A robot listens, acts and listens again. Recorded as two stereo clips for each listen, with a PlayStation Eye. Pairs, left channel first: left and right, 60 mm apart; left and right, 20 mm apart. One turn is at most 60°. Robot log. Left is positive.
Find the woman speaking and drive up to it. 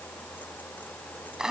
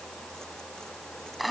cmd idle
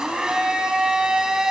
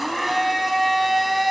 cmd idle
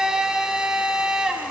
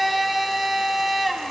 end: I can't make out a woman speaking, only a blender.